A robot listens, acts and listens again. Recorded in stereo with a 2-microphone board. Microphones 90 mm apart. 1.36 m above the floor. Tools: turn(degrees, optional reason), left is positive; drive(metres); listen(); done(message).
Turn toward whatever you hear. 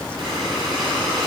turn(degrees=-90)
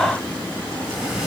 turn(degrees=-10, reason="So it is at 10° right.")
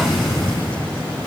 done("Found it: breathing, straight ahead.")